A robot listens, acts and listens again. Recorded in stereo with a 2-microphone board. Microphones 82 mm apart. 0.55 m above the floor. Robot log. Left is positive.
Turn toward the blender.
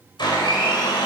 note: The blender: about 65° left or 115° left.
cmd yaw +65
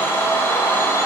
note: So it is at 35° left.
cmd yaw +35
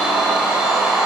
note: The blender is now 10° right.
cmd yaw -10
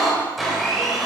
end: Facing the blender.